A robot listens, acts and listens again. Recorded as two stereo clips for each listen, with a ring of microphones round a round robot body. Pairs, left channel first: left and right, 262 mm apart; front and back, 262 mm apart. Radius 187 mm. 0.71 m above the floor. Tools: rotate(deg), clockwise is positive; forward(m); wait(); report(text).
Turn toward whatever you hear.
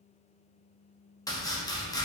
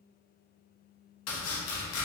rotate(-15)
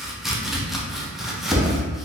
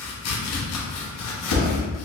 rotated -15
report("Facing the chopping.")